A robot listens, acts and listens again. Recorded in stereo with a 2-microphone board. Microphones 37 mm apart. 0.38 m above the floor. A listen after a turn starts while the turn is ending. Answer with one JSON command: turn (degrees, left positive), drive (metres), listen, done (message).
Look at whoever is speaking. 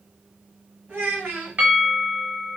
{"turn": -65}
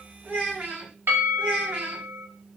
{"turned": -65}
{"turn": -30}
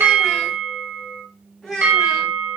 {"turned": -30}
{"done": "Found it: a child speaking, straight ahead, 1 to 2 m away."}